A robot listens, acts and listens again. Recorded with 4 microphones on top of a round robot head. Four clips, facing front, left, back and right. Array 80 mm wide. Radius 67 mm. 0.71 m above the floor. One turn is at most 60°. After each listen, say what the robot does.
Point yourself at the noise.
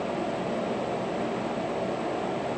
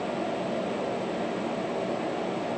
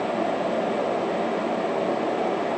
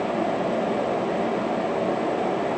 Keep listening.
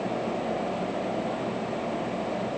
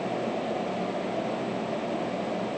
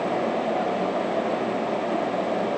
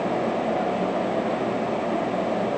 Keep listening.
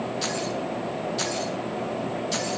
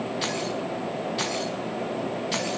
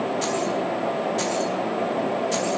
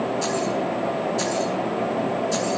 Turn 60° left.
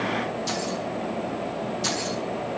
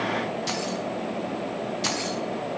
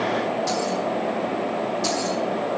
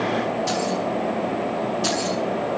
Turn 60° left.
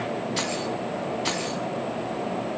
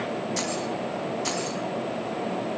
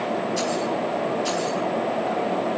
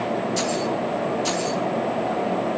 Turn 25° left.
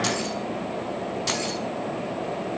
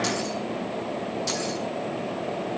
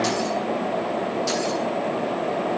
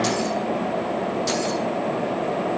Facing the keys jangling, over 4 m away.